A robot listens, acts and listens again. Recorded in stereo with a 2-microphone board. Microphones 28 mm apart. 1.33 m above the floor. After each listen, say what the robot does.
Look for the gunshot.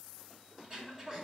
Keep listening.
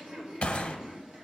Turn 50° left.
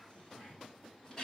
Keep listening.
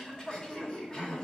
I heard a gunshot, but can't make it out now. It was about straight ahead or 80° left.